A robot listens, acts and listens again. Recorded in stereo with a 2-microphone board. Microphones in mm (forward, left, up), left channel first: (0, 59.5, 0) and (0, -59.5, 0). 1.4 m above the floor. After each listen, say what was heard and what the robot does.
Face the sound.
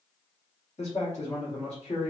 Turn 90° left.
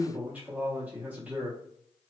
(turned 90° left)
So it is at 15° right. Turn 15° right.
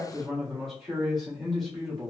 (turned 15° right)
Facing the man speaking, 1 to 2 m away.